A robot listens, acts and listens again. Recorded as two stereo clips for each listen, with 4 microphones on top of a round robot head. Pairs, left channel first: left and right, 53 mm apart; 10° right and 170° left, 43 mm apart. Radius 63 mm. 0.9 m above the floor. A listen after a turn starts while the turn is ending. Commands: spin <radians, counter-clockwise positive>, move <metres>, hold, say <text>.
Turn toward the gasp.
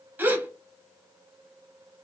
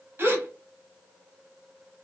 spin -2.44
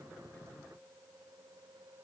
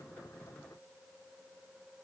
say I heard a gasp from this way, but can't make it out now.